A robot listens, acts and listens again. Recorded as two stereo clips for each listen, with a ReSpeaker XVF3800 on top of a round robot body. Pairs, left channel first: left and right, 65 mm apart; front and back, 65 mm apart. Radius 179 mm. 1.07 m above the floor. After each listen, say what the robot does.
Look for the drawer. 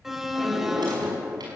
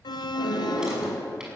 Turn 100° right.
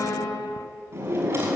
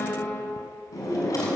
Turn 35° right.
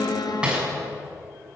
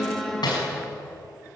Turn 10° right.
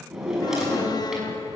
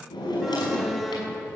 Facing the drawer.